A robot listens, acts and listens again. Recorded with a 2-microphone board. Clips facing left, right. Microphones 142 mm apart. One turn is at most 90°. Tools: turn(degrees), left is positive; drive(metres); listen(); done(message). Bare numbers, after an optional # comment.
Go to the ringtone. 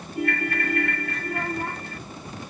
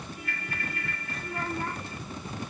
turn(90)
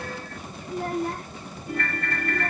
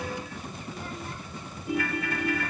# So it is at 10° right.
turn(-10)
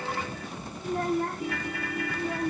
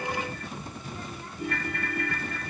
drive(1.0)
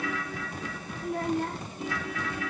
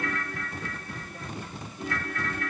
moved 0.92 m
drive(1.0)
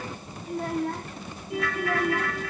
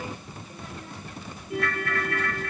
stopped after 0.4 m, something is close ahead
done("Blocked. The ringtone is further on, straight ahead.")